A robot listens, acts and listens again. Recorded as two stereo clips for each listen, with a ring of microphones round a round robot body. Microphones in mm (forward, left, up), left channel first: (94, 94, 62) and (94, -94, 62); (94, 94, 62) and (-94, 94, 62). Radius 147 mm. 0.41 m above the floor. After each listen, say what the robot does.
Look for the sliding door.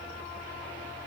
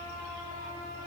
Keep listening.
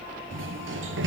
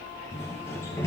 Turn 80° right.
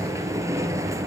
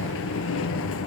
Turn 15° right.
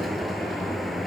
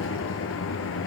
Found it: a sliding door, straight ahead, 1 to 2 m away.